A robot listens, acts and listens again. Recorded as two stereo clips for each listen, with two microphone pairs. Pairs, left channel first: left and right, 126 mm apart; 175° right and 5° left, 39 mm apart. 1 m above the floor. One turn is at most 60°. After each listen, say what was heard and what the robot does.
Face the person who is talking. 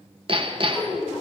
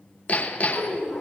Facing the child speaking, over 4 m away.